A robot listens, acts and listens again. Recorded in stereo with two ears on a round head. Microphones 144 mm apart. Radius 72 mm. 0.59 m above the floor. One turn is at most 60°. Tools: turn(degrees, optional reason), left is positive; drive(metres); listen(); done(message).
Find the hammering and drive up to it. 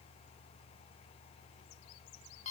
listen()
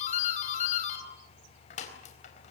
listen()
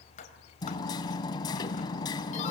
turn(degrees=25, reason="The hammering: about 25° left or 155° left.")
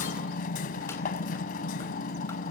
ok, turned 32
turn(degrees=60, reason="So it is at 120° left.")
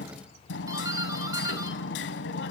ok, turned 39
turn(degrees=60, reason="The hammering is now 80° left.")
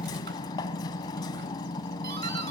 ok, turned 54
turn(degrees=25, reason="The hammering is now 25° left.")
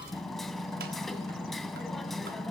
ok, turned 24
drive(metres=1.0)
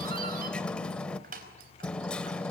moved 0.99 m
drive(metres=1.0)
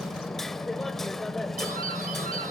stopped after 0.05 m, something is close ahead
done("Arrived at the hammering, straight ahead.")